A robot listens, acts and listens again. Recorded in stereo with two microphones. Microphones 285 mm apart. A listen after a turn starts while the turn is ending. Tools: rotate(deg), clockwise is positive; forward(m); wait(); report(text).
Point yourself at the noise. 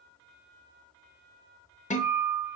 rotate(-25)
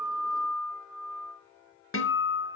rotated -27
rotate(-125)
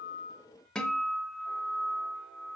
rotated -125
report("Found it: a guitar, straight ahead, under 1 m away.")